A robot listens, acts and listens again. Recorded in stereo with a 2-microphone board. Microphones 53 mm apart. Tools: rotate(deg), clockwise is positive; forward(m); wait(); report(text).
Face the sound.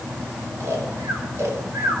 rotate(55)
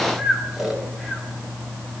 report("Found it: snoring, straight ahead.")